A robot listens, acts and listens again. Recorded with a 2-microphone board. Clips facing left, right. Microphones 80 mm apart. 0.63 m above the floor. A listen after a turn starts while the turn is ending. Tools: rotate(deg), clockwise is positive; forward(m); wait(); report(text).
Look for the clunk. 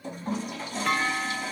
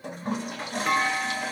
rotate(30)
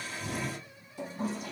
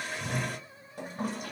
wait()
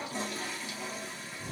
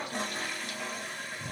report("I heard a clunk, but can't make it out now. It was about 20° left or 140° right.")